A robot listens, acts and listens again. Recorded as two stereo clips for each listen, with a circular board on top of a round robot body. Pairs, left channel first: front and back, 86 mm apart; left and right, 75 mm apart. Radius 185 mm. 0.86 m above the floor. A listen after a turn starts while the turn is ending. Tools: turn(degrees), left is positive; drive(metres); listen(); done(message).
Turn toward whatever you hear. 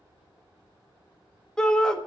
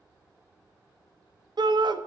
turn(degrees=-80)
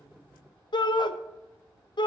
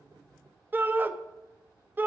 turn(degrees=-30)
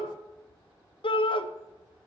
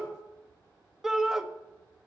turn(degrees=-10)
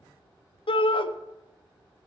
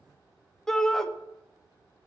done("Facing the shout.")